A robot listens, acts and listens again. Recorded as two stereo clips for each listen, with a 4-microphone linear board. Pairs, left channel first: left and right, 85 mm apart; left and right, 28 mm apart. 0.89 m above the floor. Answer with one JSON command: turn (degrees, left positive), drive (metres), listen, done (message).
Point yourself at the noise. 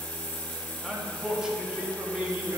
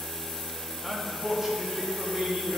{"turn": -15}
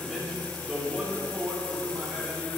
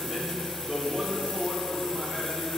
{"turn": -30}
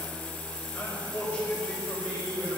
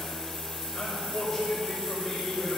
{"turn": 15}
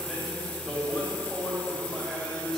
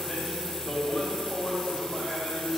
{"done": "Facing the man speaking, over 4 m away."}